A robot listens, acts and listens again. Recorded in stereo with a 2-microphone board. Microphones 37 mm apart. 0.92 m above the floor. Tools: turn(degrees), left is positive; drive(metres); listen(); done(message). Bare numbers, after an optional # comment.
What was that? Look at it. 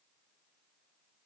listen()
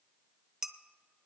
turn(-30)
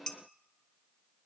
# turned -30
# So it is at 15° left.
turn(15)
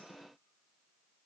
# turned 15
listen()
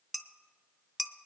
done("Facing the dishes clattering, under 1 m away.")